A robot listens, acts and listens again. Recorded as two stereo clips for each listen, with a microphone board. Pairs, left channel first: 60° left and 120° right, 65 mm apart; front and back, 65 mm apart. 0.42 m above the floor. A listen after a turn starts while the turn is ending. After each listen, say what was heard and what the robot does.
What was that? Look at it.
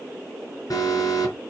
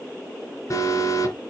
The alarm: 35° left. Turn 35° left.
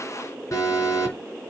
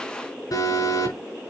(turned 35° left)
The alarm is now 20° left. Turn 20° left.
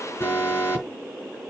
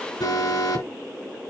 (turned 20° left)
The alarm is now 10° left. Turn 10° left.
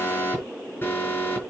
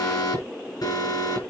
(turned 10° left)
Found it: an alarm, straight ahead, over 4 m away.